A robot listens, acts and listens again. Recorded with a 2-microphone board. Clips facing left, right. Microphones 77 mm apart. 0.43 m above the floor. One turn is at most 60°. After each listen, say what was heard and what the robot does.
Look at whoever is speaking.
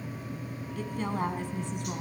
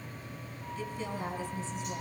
The woman speaking: about 55° left or 125° left. Turn 55° left.
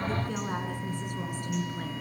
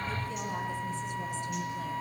So it is at 55° left. Turn 55° left.
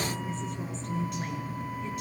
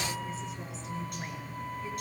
Found it: a woman speaking, straight ahead.